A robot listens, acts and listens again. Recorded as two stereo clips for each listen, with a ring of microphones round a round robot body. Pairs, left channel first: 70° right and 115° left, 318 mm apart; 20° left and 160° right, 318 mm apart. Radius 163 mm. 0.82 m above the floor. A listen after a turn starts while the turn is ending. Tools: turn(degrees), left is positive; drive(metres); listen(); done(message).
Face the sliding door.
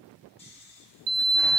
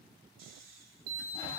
turn(degrees=155)
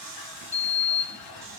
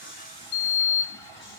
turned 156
done("Facing the sliding door.")